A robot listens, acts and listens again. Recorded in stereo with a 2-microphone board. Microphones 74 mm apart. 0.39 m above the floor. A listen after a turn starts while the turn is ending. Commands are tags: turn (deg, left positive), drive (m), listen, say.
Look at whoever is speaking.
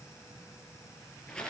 <listen/>
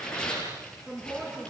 <turn deg="-30"/>
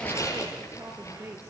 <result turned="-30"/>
<turn deg="-140"/>
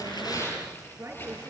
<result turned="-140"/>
<turn deg="-35"/>
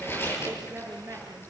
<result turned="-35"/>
<turn deg="-35"/>
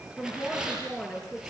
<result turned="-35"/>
<turn deg="10"/>
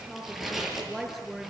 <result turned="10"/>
<say>Found it: a woman speaking, straight ahead.</say>